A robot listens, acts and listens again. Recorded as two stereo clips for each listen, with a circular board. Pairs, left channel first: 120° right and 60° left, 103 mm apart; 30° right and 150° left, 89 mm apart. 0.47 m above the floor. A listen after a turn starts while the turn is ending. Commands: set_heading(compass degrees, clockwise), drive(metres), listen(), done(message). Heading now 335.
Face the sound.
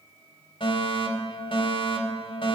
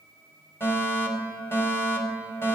set_heading(65)
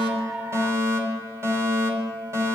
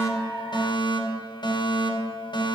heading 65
done("Found it: a fire alarm, straight ahead, over 4 m away.")